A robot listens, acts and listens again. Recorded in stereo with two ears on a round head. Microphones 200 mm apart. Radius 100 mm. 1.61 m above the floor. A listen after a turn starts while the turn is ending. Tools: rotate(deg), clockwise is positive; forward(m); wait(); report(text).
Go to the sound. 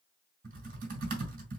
rotate(40)
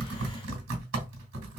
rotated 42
rotate(90)
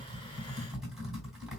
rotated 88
forward(1.0)
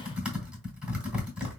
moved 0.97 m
forward(1.0)
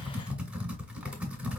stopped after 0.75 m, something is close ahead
rotate(10)
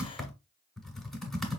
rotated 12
report("Arrived at the typing on a keyboard, straight ahead.")